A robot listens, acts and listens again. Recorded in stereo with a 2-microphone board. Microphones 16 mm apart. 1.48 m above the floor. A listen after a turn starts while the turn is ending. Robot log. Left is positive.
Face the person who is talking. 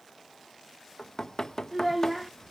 cmd yaw -30
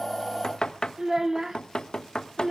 note: So it is at 140° right.
cmd yaw -140
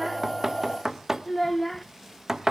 note: The child speaking is now 10° left.
cmd yaw +10
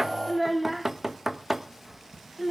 end: Found it: a child speaking, straight ahead, 1 to 2 m away.